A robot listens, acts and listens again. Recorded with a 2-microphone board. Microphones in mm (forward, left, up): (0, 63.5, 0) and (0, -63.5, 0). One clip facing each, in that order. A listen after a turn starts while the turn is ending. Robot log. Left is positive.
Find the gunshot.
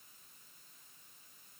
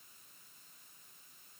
cmd idle
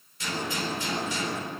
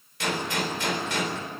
cmd yaw -90
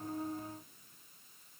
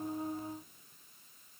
end: Facing where the gunshot came from. I can't hear it now.